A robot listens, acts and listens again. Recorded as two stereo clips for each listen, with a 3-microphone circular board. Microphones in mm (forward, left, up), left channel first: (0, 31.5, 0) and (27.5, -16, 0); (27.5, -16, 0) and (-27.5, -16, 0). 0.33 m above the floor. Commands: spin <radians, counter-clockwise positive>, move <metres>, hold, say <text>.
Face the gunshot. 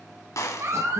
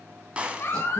spin 2.01
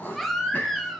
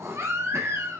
say Facing where the gunshot came from. I can't hear it now.